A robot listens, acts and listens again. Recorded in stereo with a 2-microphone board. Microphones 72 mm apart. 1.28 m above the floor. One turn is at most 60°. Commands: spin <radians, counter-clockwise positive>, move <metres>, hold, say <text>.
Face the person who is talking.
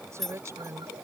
spin -0.70
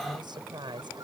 spin -1.05
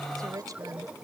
spin -0.87
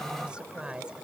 spin -0.26
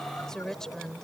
say Facing the woman speaking.